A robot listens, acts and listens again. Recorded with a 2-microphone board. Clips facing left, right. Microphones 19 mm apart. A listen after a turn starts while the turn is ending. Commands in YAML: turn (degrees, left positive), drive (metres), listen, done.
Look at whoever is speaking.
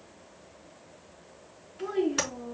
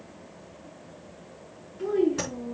turn: 35
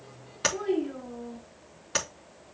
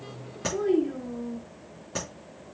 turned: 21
turn: 15
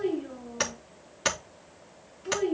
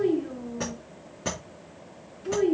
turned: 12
done: "Found it: a child speaking, straight ahead."